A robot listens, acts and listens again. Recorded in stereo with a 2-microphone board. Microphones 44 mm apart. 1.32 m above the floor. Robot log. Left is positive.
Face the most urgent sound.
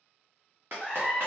cmd yaw +30
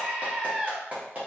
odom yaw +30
note: So it is at 15° right.
cmd yaw -15
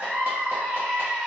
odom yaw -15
end: Facing the scream.